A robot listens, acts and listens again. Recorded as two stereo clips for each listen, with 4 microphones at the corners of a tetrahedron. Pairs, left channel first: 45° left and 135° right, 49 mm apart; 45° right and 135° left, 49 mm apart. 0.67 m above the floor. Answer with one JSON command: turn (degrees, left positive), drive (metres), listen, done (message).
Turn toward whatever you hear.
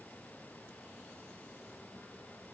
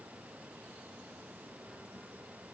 {"listen": true}
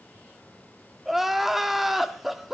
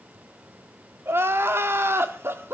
{"turn": 140}
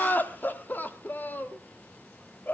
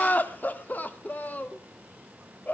{"done": "Facing the crying."}